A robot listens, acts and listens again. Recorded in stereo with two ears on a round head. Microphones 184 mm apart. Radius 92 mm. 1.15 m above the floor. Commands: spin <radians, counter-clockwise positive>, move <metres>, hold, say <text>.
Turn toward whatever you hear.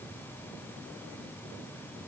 hold
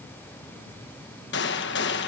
spin 1.05
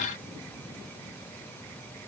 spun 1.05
hold
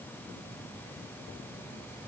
say I heard a gunshot, but can't make it out now. It was about straight ahead or 60° left.